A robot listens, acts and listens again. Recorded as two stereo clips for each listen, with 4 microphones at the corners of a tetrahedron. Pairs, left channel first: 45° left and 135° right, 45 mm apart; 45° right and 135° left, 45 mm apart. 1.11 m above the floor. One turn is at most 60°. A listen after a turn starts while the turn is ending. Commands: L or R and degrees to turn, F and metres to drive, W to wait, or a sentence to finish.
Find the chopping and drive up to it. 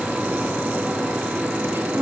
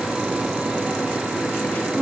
W
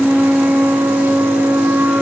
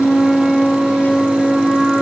W
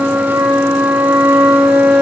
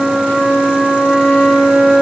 I can't make out chopping, only a flute.